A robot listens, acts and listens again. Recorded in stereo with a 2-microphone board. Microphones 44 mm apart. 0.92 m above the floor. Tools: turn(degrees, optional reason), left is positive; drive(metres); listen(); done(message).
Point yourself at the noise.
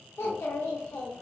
turn(degrees=70, reason="The child speaking: about 70° left or 110° left.")
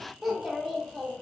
done("Facing the child speaking, 1 to 2 m away.")